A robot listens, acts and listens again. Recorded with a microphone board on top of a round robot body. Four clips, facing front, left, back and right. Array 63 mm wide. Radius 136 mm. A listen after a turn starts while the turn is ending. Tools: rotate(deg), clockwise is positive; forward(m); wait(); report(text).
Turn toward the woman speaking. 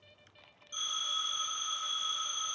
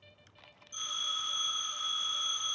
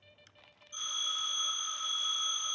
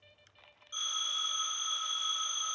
wait()
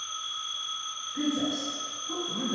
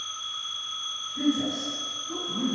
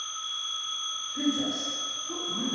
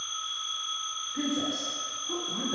rotate(75)
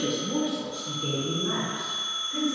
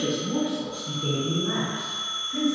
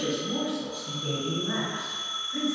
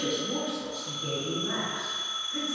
rotate(-15)
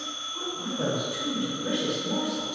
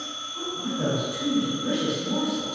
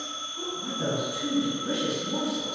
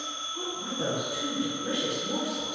report("Facing the woman speaking.")